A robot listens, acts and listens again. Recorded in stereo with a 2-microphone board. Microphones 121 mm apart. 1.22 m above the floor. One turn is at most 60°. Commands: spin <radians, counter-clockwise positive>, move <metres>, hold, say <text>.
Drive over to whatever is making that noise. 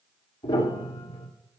spin 0.70
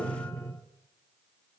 move 1.0
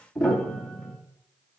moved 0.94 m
move 1.0
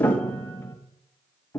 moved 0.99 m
spin 0.26
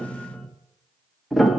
move 1.0
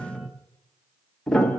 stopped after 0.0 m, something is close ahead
say Arrived at the piano, straight ahead.